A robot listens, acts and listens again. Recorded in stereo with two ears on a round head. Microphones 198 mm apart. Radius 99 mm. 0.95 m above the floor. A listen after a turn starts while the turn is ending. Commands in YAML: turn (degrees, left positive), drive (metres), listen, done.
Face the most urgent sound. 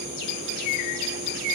listen: true
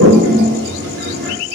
listen: true
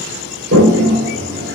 done: "I can't make out anything urgent to turn to."